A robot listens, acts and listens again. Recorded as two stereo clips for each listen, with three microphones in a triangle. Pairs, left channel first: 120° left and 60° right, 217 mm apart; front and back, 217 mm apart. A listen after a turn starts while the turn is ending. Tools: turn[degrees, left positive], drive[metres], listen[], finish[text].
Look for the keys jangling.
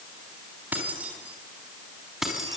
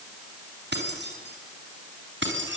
Thought: The keys jangling: 150° right.
Action: turn[-150]
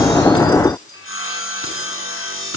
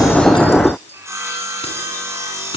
Action: listen[]
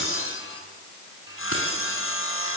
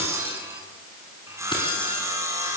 Action: listen[]
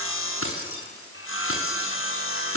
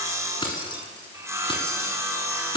Thought: The keys jangling is now 70° right.
Action: turn[-70]
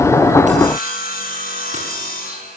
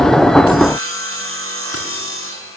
Action: listen[]
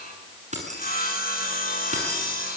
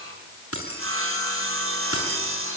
Action: finish[Facing the keys jangling.]